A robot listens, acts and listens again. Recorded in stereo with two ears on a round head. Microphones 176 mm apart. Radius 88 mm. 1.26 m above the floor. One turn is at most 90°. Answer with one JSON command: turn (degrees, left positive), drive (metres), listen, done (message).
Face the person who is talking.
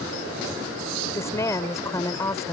{"turn": 15}
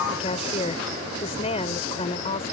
{"turn": 90}
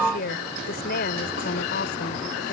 {"turn": 50}
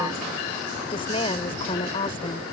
{"turn": 30}
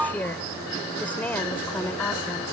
{"turn": 10}
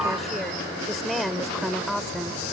{"done": "Found it: a woman speaking, straight ahead."}